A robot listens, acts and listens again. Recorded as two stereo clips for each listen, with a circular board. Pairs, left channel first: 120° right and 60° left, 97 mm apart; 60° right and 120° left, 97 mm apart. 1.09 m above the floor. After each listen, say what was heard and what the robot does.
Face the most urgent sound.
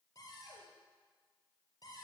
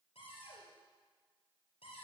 Keep listening.
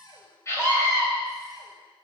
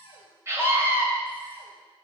The scream: straight behind. Turn 180° left.
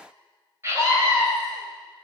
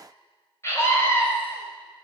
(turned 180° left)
Facing the scream, over 4 m away.